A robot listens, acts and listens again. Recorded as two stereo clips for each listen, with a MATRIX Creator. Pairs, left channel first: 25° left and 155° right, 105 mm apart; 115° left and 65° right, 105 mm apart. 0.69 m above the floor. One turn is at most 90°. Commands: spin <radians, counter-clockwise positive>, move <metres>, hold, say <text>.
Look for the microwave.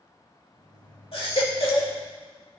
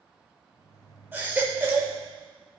spin 1.13
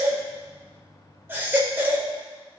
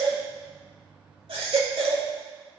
spin -0.52
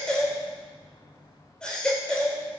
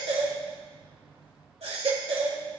say Facing the microwave, 2 to 4 m away.